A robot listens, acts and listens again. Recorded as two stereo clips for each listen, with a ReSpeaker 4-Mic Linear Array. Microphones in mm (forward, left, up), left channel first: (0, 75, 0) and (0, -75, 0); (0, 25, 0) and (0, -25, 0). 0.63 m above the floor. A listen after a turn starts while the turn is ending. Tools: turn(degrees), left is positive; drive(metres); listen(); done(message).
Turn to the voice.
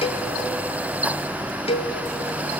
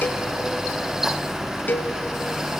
listen()
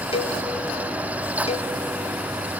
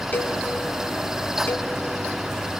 listen()
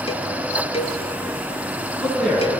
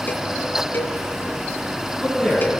turn(degrees=30)
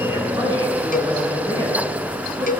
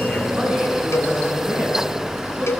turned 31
turn(degrees=-25)
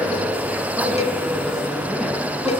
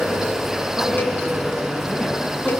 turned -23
listen()
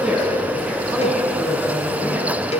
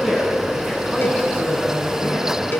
done("Facing the man speaking, over 4 m away.")